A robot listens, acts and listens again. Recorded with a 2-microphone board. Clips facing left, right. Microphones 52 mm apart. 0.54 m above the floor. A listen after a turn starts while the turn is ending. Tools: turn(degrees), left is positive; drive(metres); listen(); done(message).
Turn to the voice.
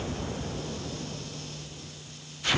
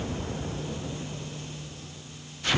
listen()
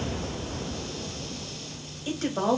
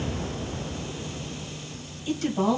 turn(degrees=45)
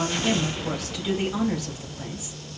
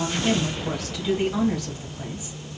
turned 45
done("Found it: a woman speaking, straight ahead.")